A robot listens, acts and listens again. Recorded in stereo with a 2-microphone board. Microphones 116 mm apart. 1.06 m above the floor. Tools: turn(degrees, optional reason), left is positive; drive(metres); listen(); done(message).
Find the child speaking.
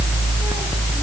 listen()
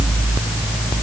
listen()
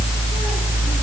done("I can't make out a child speaking.")